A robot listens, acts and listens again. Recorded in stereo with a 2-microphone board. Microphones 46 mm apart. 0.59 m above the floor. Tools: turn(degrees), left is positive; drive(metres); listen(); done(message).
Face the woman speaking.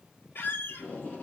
listen()
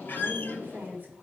turn(degrees=-40)
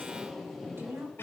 turn(degrees=-100)
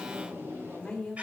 turn(degrees=15)
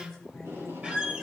done("Found it: a woman speaking, straight ahead.")